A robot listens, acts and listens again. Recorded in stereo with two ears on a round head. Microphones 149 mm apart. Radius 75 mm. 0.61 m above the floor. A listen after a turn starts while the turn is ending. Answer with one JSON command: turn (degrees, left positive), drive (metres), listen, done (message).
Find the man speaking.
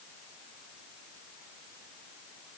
{"listen": true}
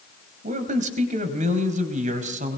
{"turn": -50}
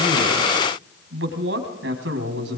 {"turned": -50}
{"turn": -80}
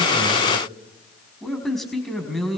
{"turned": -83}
{"done": "Facing the man speaking."}